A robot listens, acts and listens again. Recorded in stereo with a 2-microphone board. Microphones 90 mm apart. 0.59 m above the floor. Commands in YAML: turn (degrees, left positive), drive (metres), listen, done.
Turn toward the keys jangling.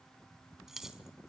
turn: -30
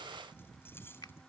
turn: 25
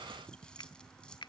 listen: true
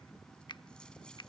listen: true
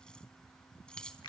turn: 10
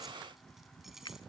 done: "Found it: keys jangling, straight ahead."